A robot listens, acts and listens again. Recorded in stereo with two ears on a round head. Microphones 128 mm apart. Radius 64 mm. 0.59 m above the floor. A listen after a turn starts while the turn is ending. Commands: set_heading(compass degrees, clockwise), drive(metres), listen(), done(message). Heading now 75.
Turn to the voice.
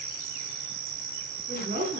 set_heading(125)
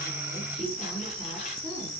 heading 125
done("Facing the woman speaking, over 4 m away.")